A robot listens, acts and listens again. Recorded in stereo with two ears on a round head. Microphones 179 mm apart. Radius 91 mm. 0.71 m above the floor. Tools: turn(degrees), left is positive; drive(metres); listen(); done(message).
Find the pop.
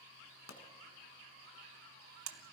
turn(degrees=90)
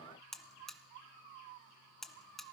done("Facing where the pop came from. I can't hear it now.")